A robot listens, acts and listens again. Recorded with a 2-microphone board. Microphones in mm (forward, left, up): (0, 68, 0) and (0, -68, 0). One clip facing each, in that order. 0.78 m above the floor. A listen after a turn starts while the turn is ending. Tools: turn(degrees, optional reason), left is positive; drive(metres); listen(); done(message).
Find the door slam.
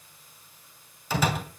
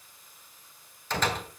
turn(degrees=30)
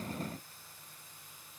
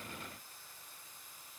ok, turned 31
listen()
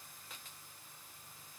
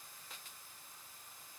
done("I heard a door slam, but can't make it out now. It was about 25° right or 140° left.")